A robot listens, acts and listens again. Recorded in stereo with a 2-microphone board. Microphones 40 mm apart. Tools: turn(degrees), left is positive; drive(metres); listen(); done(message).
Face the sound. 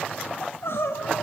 turn(degrees=75)
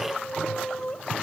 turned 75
turn(degrees=20)
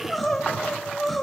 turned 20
done("Facing the crying, 2 to 4 m away.")